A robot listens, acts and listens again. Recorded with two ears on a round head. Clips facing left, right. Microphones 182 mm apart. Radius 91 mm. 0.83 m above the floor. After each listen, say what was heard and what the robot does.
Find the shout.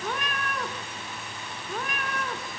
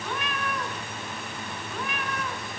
Keep listening.
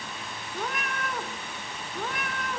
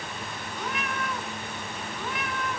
Keep listening.
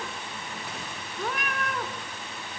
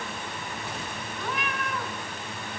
I can't make out a shout to turn to.